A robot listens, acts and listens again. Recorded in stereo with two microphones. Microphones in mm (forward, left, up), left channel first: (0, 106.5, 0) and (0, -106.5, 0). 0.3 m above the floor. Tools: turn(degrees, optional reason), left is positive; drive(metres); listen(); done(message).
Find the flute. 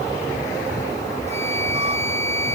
turn(degrees=-30, reason="The flute: about 30° right or 150° right.")
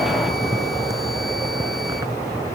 listen()
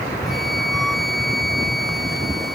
done("Found it: a flute, straight ahead.")